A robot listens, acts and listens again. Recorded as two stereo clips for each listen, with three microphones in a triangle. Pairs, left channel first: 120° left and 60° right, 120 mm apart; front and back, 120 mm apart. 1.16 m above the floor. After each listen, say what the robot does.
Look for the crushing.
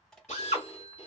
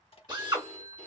Turn 35° left.
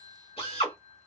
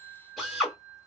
Keep listening.
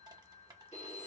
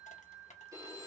Found it: crushing, straight ahead.